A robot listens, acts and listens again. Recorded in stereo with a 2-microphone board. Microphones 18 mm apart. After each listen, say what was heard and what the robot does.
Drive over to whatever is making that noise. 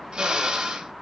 The drill: about 45° right or 135° right. Turn 45° right.
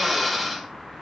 Drive 1.0 m forward.
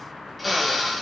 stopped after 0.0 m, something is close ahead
Something is in my way. I am facing the drill but have not reached it.